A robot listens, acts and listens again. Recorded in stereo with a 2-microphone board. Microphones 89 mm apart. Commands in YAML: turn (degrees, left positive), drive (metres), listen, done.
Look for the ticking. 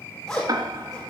turn: -45
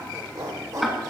done: "Facing the ticking, 1 to 2 m away."